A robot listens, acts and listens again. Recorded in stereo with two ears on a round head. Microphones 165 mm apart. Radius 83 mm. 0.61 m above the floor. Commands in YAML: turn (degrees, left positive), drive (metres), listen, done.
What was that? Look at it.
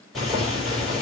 turn: 30
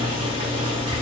turn: -30
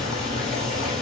done: "Found it: boiling, straight ahead, 2 to 4 m away."